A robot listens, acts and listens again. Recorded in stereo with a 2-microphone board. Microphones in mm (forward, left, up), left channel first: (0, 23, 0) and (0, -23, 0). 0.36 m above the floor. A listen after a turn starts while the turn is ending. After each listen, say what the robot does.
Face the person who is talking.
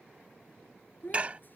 Turn 45° left.
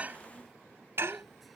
Keep listening.
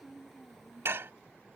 Facing the child speaking.